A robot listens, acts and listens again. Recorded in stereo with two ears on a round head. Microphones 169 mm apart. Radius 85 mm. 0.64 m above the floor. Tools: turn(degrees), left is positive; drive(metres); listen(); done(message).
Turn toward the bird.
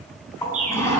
turn(degrees=-45)
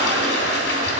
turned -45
listen()
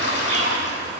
listen()
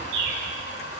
turn(degrees=-85)
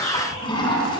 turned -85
listen()
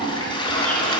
listen()
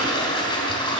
done("I heard a bird from this way, but can't make it out now.")